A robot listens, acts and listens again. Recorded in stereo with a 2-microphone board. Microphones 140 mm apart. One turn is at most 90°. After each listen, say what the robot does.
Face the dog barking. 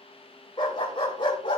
Turn 35° left.
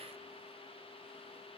Keep listening.
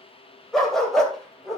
Facing the dog barking.